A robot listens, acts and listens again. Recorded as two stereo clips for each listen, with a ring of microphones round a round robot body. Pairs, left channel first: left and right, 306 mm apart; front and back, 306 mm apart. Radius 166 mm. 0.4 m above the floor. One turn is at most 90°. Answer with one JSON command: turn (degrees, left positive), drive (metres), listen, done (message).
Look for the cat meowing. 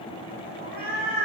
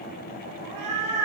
{"turn": 90}
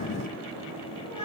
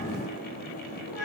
{"turn": 50}
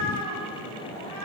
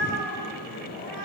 {"done": "Facing the cat meowing."}